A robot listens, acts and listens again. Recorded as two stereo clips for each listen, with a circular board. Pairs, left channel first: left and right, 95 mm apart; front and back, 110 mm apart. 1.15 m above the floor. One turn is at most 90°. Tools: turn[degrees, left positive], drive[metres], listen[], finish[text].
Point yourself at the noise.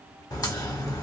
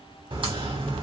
Thought: The crack: 140° left.
Action: turn[90]
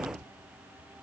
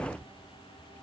Thought: Nothing new. It was at 50° left.
Action: turn[50]
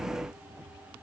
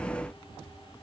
Action: finish[I heard a crack from this way, but can't make it out now.]